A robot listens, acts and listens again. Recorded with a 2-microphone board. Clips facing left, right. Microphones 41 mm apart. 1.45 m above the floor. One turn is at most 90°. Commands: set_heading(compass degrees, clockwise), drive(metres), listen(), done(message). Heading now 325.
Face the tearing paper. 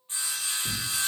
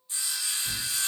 set_heading(270)
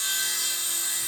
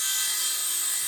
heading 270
listen()
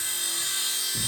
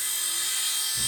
set_heading(195)
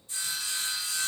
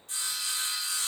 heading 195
listen()
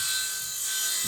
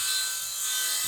set_heading(180)
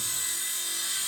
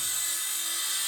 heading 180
listen()
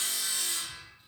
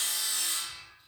listen()
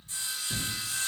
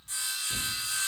done("Facing the tearing paper.")